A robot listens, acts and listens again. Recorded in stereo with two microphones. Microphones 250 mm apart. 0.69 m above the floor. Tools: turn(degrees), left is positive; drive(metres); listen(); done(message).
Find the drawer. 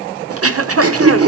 listen()
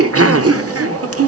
listen()
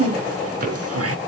turn(degrees=-35)
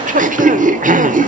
listen()
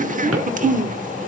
listen()
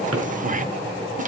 done("I heard a drawer, but can't make it out now. It was about straight ahead or 110° right.")